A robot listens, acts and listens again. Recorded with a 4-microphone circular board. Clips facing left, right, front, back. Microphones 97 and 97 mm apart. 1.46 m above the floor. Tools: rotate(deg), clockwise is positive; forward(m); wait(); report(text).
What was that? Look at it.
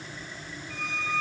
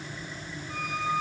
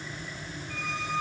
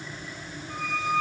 rotate(135)
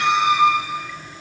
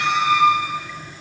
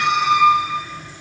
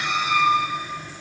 rotate(-20)
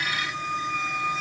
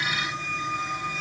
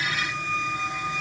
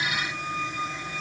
report("Facing the squeak, over 4 m away.")